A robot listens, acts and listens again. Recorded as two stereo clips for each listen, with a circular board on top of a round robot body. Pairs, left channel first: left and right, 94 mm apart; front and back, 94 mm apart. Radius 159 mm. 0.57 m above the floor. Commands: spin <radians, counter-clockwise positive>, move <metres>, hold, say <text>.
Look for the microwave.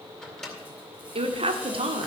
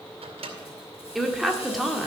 spin 3.05
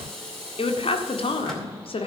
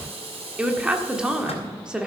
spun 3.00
hold
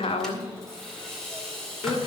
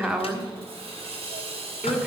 hold
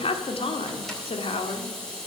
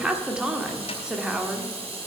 say Facing where the microwave came from. I can't hear it now.